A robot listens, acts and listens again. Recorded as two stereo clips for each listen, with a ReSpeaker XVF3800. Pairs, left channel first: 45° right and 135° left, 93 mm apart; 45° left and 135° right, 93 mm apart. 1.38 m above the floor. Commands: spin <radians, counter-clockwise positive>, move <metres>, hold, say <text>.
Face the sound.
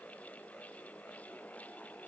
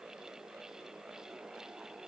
hold
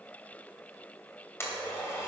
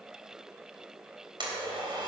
spin -1.83
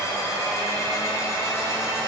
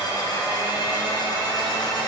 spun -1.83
spin 0.17
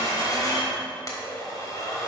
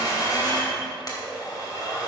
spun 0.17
say Found it: a blender, straight ahead.